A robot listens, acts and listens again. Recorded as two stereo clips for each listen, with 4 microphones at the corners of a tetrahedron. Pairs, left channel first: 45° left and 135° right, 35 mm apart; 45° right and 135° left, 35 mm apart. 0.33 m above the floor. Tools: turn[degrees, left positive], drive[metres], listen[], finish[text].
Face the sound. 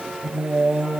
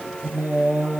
Thought: The singing: 155° left.
Action: turn[155]
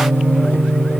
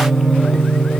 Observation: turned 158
Thought: The singing is now 35° left.
Action: turn[35]
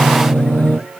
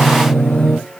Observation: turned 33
Thought: The singing is now 10° left.
Action: turn[10]
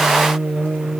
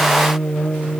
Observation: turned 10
Action: finish[Facing the singing, over 4 m away.]